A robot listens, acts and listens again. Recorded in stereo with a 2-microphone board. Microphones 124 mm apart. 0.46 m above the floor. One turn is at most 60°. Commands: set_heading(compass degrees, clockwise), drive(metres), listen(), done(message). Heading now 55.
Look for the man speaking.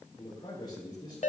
set_heading(20)
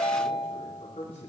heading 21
set_heading(321)
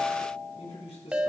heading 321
set_heading(266)
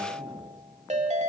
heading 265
done("Facing the man speaking, 2 to 4 m away.")